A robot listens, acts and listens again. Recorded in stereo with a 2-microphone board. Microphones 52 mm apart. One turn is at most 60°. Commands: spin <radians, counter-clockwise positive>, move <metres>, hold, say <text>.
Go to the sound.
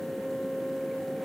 hold
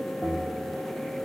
spin -0.52
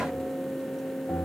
spin 0.44
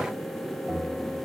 move 1.0
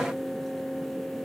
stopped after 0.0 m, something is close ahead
hold
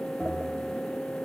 say Something is in my way. I am facing the bell but have not reached it.